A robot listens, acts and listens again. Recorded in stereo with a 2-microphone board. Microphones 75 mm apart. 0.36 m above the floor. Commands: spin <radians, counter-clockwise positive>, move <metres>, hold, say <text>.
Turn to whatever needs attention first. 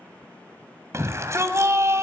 spin -0.70
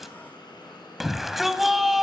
say Found it: a shout, straight ahead, 2 to 4 m away.